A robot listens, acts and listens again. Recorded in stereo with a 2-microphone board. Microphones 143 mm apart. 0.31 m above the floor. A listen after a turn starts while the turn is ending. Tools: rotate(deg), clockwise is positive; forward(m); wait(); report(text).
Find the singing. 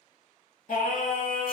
rotate(-70)
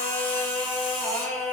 report("Facing the singing, under 1 m away.")